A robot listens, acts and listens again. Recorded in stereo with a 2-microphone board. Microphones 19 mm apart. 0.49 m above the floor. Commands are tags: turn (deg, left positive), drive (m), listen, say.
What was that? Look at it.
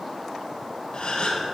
<turn deg="55"/>
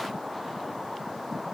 <listen/>
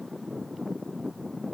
<say>I heard a gasp, but can't make it out now. It was about straight ahead or 70° left.</say>